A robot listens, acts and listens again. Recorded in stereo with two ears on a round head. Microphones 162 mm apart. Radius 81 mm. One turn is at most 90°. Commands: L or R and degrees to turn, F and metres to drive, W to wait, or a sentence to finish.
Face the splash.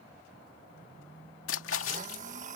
L90
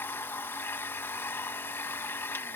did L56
L35
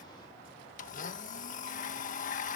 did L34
I heard a splash from this way, but can't make it out now.